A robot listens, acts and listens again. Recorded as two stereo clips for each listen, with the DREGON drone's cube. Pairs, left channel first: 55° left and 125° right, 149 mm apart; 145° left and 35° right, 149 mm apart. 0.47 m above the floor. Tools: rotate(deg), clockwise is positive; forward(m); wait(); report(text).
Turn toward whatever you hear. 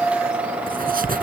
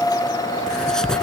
rotate(130)
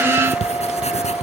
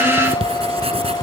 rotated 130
rotate(-15)
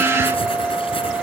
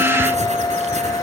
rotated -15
wait()
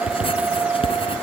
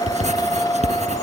report("Facing the writing.")